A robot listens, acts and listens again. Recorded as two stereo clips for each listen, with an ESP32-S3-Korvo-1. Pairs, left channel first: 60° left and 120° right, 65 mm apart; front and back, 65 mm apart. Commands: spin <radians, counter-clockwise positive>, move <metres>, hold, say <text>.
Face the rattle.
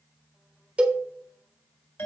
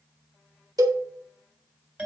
hold
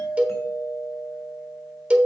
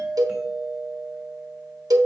hold
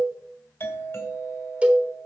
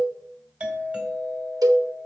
say I can't make out a rattle to turn to.